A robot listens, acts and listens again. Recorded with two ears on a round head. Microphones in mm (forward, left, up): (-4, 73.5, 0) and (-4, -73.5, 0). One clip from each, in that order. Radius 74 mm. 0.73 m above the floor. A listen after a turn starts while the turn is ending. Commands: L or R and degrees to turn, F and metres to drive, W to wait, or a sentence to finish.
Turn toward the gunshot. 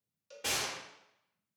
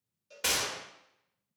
R60
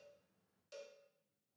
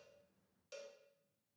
W
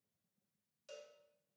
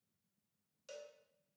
I heard a gunshot, but can't make it out now. It was about straight ahead or 60° right.